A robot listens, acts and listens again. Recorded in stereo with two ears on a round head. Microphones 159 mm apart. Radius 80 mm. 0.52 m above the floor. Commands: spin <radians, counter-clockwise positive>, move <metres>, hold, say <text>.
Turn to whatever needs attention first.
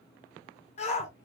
spin 0.70
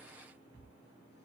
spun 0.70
hold
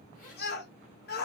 spin 1.66
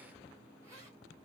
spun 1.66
hold
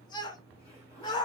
spin 0.44
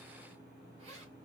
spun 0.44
hold
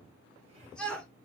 say Facing the shout, 1 to 2 m away.